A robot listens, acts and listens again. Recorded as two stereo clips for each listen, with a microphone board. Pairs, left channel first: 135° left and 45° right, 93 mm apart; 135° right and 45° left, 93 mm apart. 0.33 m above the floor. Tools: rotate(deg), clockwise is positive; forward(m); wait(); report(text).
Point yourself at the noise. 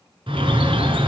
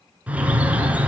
rotate(30)
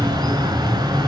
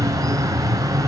report("Facing the bird.")